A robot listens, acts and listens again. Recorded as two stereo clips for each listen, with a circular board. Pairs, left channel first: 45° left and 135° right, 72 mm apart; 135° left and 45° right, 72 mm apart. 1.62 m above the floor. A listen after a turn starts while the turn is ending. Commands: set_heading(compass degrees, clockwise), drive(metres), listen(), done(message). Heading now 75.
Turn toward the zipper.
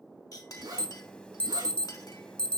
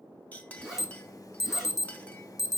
set_heading(195)
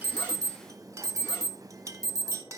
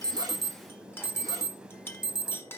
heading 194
listen()
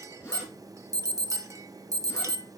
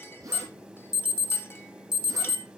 done("Facing the zipper.")